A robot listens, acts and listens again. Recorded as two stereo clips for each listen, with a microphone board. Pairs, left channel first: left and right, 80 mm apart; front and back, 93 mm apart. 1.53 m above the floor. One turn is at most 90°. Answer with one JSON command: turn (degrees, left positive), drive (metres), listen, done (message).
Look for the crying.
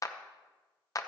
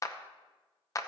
{"listen": true}
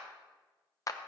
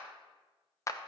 {"listen": true}
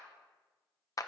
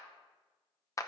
{"done": "I can't make out crying, only a clap."}